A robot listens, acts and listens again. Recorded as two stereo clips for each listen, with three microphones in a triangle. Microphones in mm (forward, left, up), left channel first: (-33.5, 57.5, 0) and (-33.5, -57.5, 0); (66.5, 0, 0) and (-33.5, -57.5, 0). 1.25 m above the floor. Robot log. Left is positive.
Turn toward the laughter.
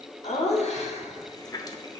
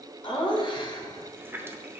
note: The laughter: 80° left.
cmd yaw +80
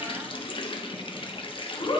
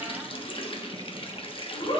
note: The laughter is now 40° left.
cmd yaw +40
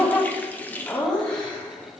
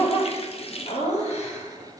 note: The laughter is now 10° left.
cmd yaw +10
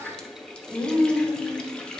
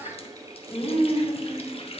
end: Found it: laughter, straight ahead, 2 to 4 m away.